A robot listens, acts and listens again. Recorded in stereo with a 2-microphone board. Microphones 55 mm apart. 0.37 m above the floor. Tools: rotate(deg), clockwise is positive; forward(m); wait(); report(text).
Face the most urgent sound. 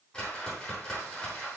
wait()
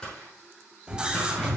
rotate(15)
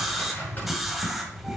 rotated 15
report("Found it: a scream, straight ahead, 1 to 2 m away.")